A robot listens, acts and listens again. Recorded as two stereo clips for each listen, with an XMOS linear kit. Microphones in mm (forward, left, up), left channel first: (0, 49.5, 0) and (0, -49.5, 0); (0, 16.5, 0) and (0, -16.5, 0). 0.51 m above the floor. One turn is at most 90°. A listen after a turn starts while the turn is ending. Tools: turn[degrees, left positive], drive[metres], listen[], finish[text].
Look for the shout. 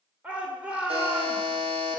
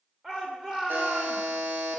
Action: turn[-30]
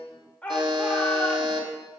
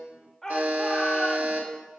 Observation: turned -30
Thought: So it is at 15° left.
Action: turn[15]
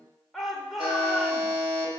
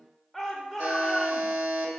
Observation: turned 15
Action: finish[Facing the shout, 1 to 2 m away.]